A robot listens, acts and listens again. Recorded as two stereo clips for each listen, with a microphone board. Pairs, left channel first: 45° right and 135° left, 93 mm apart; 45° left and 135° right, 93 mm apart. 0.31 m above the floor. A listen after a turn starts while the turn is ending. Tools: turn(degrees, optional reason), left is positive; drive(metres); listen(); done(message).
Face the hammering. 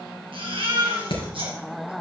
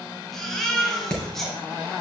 turn(degrees=-35, reason="The hammering: 35° right.")
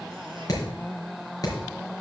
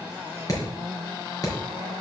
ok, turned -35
done("Found it: hammering, straight ahead, 2 to 4 m away.")